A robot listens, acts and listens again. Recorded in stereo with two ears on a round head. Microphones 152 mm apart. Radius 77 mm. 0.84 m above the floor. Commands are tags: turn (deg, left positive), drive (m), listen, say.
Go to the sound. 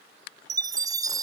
<turn deg="-25"/>
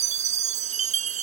<turn deg="-135"/>
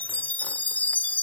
<turn deg="10"/>
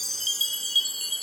<drive m="1.0"/>
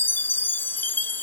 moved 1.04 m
<turn deg="10"/>
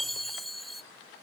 <drive m="1.0"/>
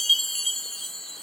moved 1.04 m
<drive m="1.0"/>
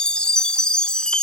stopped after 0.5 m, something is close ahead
<say>I am next to the chime.</say>